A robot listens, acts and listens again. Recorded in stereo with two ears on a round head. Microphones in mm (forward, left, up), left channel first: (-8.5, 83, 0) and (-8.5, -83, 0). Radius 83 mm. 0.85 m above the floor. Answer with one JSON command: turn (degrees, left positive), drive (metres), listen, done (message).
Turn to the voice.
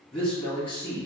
{"turn": 30}
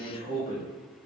{"turn": 145}
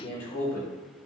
{"turn": 35}
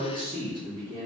{"turn": -25}
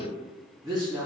{"done": "Facing the man speaking."}